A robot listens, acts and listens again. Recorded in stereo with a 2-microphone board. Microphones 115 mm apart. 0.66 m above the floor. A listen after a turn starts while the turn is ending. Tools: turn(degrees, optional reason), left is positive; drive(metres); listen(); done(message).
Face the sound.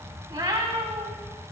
turn(degrees=-35, reason="The cat meowing: about 35° right or 145° right.")
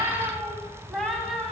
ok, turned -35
done("Found it: a cat meowing, straight ahead, 1 to 2 m away.")